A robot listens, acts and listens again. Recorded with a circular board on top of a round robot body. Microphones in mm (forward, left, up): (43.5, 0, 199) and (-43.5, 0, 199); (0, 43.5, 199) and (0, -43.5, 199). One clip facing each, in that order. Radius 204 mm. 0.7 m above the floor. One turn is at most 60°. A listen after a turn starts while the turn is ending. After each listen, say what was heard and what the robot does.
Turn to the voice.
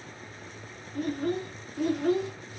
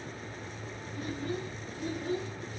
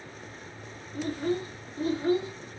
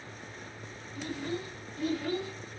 The child speaking: 20° left. Turn 20° left.
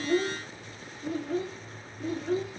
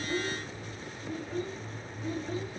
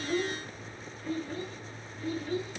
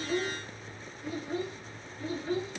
The child speaking is now 25° right. Turn 25° right.
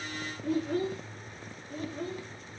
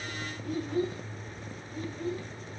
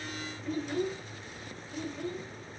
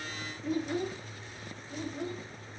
The child speaking is now 15° right. Turn 15° right.
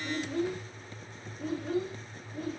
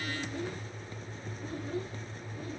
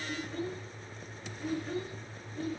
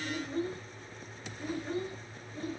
Facing the child speaking.